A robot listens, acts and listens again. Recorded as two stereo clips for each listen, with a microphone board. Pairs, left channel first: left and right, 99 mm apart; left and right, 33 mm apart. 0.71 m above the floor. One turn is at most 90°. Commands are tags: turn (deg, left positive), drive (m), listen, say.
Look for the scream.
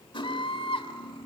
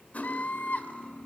<turn deg="65"/>
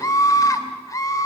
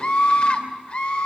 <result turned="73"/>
<turn deg="35"/>
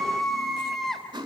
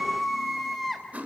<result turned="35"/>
<say>Found it: a scream, straight ahead.</say>